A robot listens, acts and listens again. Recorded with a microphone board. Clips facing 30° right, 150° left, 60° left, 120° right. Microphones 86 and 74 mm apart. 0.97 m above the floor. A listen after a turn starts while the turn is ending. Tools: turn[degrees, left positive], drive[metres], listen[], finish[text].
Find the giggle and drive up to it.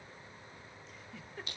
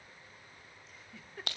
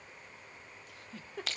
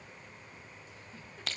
Thought: The giggle: 60° left.
Action: turn[60]
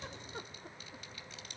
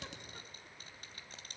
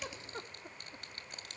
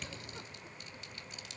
Action: listen[]
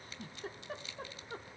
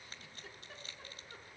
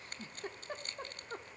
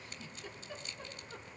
Thought: The giggle is now 15° left.
Action: turn[15]
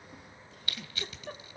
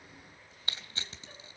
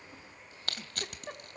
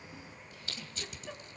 Action: drive[1.0]
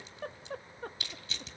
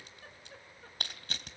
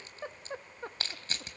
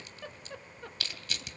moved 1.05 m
Action: drive[1.0]
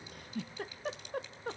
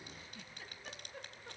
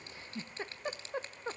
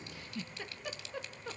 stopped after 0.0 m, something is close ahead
Action: finish[I am next to the giggle.]